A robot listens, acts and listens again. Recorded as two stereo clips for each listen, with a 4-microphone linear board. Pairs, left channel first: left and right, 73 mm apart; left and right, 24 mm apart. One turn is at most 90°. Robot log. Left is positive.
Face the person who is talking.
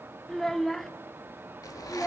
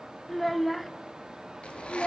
cmd yaw +30
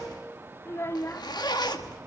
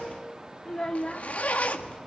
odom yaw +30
note: So it is at 145° left.
cmd yaw +90
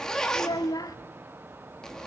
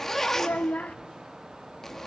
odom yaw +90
note: The child speaking is now 60° left.
cmd yaw +60
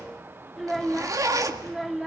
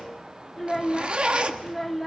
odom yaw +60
end: Facing the child speaking.